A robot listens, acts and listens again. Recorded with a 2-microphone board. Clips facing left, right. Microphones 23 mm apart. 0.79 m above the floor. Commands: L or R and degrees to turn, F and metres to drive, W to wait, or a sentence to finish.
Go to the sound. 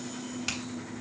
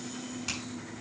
L30
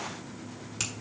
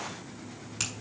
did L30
F1.0
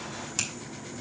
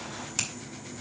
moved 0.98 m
F1.0
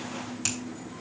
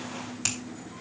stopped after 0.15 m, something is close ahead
R10
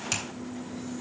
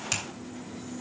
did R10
Something is in my way. I am facing the finger snap but have not reached it.